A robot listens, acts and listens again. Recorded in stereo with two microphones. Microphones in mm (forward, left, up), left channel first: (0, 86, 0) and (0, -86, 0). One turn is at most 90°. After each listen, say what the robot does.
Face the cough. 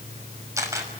Keep listening.
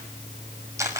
Keep listening.
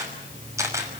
I can't make out a cough to turn to.